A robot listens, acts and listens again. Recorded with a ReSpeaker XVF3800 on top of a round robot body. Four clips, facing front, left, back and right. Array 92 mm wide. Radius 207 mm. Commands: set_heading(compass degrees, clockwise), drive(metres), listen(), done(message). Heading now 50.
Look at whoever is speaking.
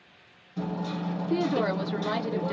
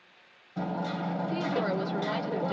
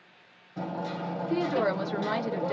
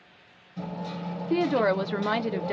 set_heading(155)
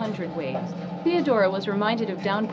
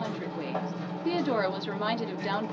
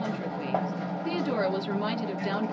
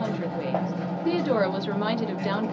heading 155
done("Facing the woman speaking, under 1 m away.")